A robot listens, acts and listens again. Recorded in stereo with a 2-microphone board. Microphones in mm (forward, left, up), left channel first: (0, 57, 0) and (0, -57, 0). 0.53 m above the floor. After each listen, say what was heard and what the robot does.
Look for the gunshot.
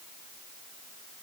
Keep listening.
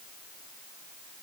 Keep listening.
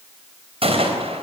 The gunshot: about 55° right or 125° right. Turn 55° right.
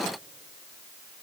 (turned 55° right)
Keep listening.
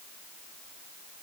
I heard a gunshot, but can't make it out now. It was about straight ahead or 70° right.